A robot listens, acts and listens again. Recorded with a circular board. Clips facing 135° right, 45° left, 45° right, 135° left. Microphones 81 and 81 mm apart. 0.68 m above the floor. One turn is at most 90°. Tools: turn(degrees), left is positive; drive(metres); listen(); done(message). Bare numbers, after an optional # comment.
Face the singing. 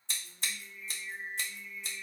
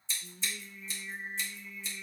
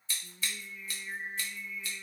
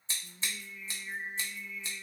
# The singing: 40° left.
turn(40)
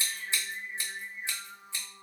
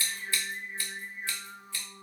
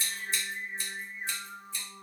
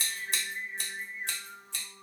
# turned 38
done("Found it: singing, straight ahead, under 1 m away.")